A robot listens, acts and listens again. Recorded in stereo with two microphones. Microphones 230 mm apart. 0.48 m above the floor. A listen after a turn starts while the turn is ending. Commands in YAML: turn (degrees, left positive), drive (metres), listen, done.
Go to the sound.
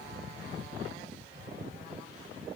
listen: true
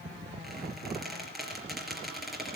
turn: 30
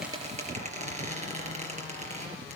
turn: -30
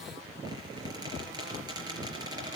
turn: -15
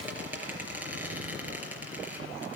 drive: 1.0
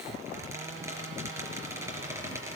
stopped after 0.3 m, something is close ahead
turn: -10
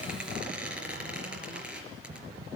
done: "Blocked. The squeak is further on, straight ahead."